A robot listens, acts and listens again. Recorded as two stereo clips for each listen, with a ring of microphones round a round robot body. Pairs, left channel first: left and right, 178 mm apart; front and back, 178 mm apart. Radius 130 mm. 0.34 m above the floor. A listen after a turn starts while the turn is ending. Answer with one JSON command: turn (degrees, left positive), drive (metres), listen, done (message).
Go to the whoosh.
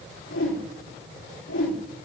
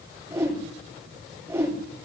{"turn": 105}
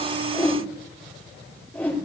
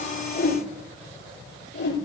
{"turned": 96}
{"turn": 10}
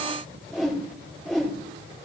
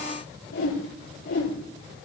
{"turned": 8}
{"drive": 1.0}
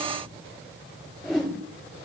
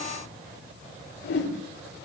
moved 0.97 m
{"drive": 1.0}
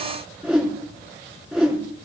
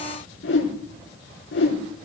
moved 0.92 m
{"drive": 1.0}
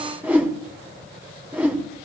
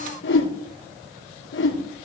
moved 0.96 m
{"turn": -10}
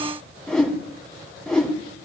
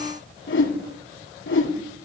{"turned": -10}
{"drive": 1.0}
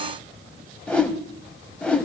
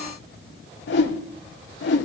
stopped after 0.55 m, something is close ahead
{"done": "I am next to the whoosh."}